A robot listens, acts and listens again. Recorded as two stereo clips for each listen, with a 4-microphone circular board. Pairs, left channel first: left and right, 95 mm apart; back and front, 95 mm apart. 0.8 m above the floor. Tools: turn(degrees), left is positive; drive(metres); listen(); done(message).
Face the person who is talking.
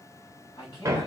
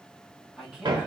turn(degrees=75)
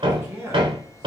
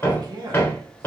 turn(degrees=-30)
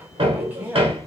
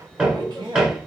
turn(degrees=-25)
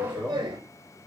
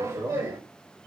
done("Facing the man speaking.")